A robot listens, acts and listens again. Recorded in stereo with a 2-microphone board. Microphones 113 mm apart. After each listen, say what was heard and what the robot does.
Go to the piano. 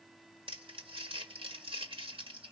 Keep listening.
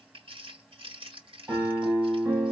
The piano: about 30° right or 150° right. Turn 30° right.
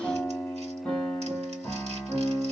Drive 1.0 m forward.
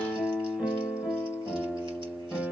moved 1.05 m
Drive 1.0 m forward.
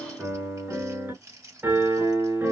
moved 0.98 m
The piano is now 20° right. Turn 20° right.
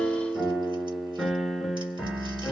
Drive 1.0 m forward.
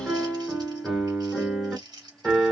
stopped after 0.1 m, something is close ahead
Arrived at the piano, straight ahead.